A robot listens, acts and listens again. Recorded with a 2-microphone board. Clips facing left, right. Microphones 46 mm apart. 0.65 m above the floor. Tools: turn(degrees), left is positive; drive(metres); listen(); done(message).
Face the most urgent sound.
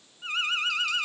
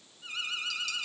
turn(degrees=50)
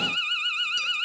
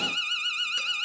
turn(degrees=20)
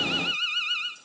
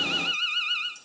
done("Facing the alarm.")